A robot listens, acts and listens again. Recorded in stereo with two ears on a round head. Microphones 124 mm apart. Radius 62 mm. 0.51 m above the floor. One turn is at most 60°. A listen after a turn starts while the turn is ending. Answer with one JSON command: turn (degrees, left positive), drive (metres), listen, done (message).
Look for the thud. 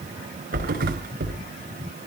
{"turn": -60}
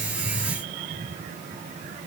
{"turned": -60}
{"listen": true}
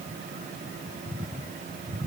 {"done": "I heard a thud, but can't make it out now. It was about 10° right or 50° right."}